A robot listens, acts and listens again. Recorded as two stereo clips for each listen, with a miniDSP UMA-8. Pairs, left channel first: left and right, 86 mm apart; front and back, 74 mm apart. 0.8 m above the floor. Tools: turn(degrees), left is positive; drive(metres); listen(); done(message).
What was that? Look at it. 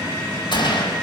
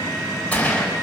turn(degrees=70)
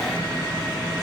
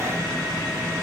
done("Facing where the gunshot came from. I can't hear it now.")